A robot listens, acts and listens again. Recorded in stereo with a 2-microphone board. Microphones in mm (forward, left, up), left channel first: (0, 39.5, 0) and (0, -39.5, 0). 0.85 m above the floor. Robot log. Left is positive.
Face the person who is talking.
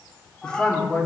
cmd yaw +30
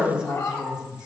note: So it is at 10° right.
cmd yaw -10
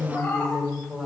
end: Facing the woman speaking, 2 to 4 m away.